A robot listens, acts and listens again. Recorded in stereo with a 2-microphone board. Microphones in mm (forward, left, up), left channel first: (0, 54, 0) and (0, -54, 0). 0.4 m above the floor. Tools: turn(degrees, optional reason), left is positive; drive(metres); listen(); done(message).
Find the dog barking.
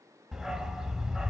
turn(degrees=-30)
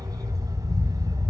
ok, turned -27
turn(degrees=-145, reason="So it is at 145° right.")
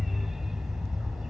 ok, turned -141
done("Found it: a dog barking, straight ahead, under 1 m away.")